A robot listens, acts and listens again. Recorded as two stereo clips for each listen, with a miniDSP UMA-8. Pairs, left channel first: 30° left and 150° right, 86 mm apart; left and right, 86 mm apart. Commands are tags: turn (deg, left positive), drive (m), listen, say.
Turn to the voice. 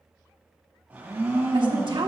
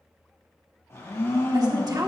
<turn deg="-130"/>
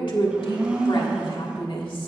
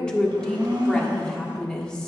<turn deg="10"/>
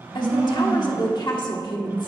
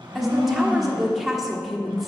<say>Facing the woman speaking, 1 to 2 m away.</say>